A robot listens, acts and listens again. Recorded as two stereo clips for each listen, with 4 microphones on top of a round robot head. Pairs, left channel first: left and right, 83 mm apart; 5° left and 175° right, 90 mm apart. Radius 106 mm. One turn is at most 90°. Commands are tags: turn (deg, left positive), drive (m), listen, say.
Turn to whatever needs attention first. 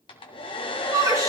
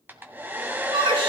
<turn deg="-90"/>
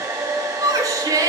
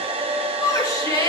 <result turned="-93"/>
<turn deg="-45"/>
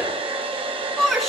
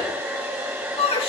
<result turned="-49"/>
<say>Found it: a shout, straight ahead, over 4 m away.</say>